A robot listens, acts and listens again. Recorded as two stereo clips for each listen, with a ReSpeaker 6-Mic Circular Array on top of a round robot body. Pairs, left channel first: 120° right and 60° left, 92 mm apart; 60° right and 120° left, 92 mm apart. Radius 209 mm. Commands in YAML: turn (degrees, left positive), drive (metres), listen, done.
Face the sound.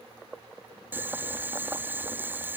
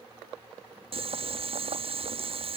turn: 130
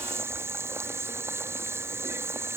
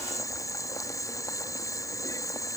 done: "Found it: boiling, straight ahead."